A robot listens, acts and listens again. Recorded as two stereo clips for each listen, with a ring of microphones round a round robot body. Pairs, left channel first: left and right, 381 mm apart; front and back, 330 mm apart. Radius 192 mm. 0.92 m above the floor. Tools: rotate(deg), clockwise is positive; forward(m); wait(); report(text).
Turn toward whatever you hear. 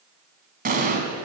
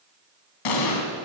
rotate(25)
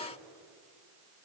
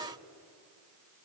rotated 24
report("I heard an explosion from this way, but can't make it out now.")